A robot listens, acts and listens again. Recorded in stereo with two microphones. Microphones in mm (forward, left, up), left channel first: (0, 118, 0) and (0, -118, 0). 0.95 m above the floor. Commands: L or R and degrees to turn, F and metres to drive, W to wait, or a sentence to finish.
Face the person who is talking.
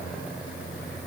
W
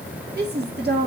R45
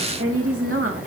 R85
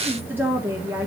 R10
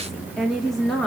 Facing the woman speaking, 1 to 2 m away.